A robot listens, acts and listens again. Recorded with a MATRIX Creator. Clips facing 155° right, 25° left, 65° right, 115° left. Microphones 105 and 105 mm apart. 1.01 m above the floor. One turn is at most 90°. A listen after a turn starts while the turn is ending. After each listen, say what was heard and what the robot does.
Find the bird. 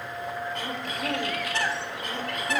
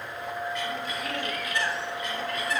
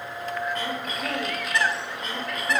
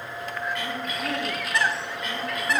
The bird: 160° right. Turn 90° right.
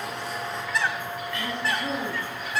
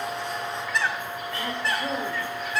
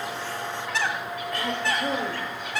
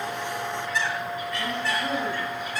The bird is now 70° right. Turn 70° right.
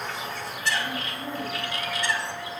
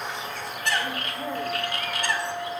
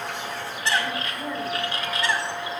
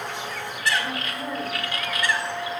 The bird is now 10° right. Turn 10° right.
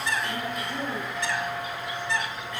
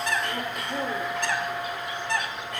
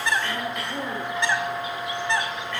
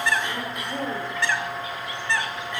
Found it: a bird, straight ahead, 1 to 2 m away.